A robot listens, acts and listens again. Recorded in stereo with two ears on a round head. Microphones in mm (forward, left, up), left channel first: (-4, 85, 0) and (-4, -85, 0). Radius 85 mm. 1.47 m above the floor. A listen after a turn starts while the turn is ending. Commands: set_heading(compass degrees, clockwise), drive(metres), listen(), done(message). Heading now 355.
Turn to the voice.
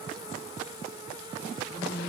set_heading(285)
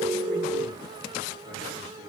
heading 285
listen()
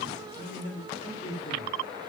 set_heading(245)
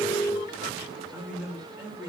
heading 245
set_heading(255)
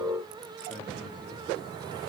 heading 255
done("Facing the man speaking, 2 to 4 m away.")